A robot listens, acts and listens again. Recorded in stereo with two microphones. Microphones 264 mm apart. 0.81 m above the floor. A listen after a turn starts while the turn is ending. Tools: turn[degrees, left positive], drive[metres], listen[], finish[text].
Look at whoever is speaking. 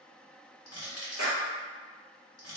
Action: listen[]
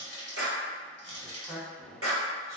Action: turn[30]
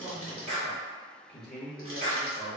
Thought: So it is at 135° left.
Action: turn[135]
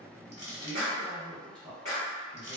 Thought: The man speaking is now 20° right.
Action: turn[-20]
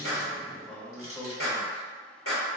Action: finish[Facing the man speaking, 1 to 2 m away.]